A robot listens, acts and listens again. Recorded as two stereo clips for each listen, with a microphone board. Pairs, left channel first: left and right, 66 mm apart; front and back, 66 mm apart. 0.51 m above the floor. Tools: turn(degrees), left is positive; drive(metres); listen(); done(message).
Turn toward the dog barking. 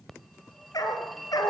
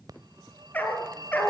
turn(degrees=65)
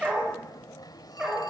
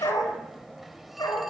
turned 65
turn(degrees=-15)
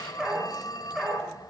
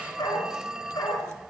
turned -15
done("Found it: a dog barking, straight ahead.")